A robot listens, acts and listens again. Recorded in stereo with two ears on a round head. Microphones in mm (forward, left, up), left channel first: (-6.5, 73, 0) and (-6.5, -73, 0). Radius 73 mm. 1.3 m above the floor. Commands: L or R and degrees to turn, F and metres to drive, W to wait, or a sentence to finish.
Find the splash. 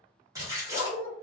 R20
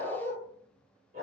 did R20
W
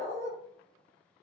I heard a splash, but can't make it out now. It was about straight ahead or 140° right.